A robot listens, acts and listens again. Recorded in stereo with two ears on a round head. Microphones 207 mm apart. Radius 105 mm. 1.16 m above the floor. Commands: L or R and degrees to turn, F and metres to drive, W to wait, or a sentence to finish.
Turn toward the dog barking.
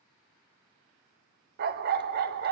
R45
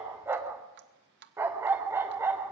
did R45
R10
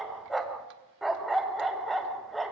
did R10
Found it: a dog barking, straight ahead.